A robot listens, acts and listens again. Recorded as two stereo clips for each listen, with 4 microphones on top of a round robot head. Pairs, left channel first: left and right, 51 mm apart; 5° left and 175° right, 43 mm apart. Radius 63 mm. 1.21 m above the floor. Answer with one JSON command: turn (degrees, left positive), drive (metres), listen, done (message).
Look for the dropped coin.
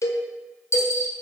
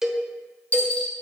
{"turn": 60}
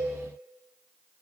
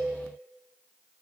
{"done": "Facing where the dropped coin came from. I can't hear it now."}